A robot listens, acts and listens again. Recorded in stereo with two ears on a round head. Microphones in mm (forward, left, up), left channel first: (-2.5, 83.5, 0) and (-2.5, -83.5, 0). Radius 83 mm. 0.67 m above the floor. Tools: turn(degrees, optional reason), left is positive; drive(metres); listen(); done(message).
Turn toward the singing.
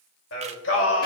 turn(degrees=70, reason="The singing: about 70° left or 110° left.")
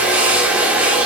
listen()
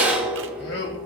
turn(degrees=65, reason="So it is at 65° left.")
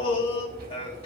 turn(degrees=35, reason="The singing is now 35° left.")
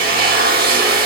listen()
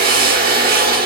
listen()
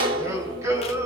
turn(degrees=-15, reason="The singing is now 15° right.")
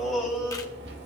done("Found it: singing, straight ahead, 2 to 4 m away.")